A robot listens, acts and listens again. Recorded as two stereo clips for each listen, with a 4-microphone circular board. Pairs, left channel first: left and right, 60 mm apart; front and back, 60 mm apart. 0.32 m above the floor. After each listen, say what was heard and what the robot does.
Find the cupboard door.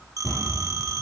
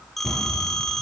The cupboard door: 90° left. Turn 90° left.
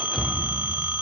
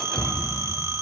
The cupboard door is now 20° left. Turn 20° left.
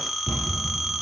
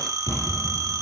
Found it: a cupboard door, straight ahead.